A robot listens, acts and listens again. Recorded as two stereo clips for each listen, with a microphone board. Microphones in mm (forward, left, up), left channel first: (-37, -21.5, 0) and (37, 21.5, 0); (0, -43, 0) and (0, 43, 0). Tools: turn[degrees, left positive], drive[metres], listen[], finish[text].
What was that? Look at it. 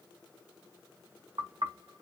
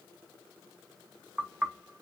Thought: The knocking: 15° left.
Action: turn[15]
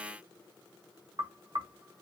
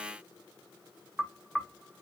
Action: finish[Found it: knocking, straight ahead.]